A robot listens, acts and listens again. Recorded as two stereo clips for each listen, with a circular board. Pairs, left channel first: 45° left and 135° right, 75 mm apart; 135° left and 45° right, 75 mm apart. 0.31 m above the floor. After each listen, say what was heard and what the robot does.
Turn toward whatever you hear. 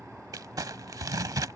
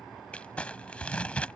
The crumpling: 155° right. Turn 155° right.
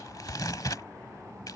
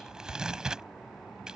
The crumpling is now 30° left. Turn 30° left.
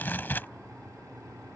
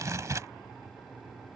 The crumpling is now 15° right. Turn 15° right.
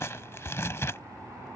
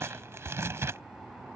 Facing the crumpling.